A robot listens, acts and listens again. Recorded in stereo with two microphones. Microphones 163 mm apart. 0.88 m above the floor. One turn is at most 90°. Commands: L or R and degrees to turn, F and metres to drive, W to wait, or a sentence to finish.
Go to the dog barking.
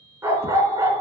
R15
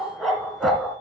F1.0
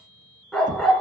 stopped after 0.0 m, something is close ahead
Something is in my way. I am facing the dog barking but have not reached it.